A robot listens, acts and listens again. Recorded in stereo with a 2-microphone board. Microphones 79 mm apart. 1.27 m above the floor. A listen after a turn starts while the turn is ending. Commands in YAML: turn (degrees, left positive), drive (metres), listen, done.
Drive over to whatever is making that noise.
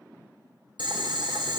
turn: -90
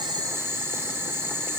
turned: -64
turn: -30
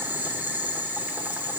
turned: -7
turn: -25
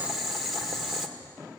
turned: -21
drive: 1.0
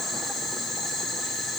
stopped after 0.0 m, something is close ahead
done: "Blocked. The boiling is further on, straight ahead."